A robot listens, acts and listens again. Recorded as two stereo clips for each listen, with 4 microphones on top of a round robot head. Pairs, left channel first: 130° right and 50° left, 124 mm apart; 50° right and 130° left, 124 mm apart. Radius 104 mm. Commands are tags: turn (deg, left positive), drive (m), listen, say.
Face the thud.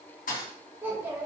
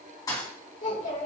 <turn deg="-110"/>
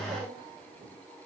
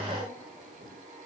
<say>Facing where the thud came from. I can't hear it now.</say>